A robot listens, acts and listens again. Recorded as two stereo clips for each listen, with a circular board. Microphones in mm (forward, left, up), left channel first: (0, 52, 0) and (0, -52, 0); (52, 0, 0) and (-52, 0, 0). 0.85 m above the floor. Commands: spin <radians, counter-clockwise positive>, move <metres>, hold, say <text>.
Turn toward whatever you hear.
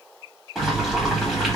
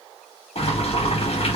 say Found it: boiling, straight ahead.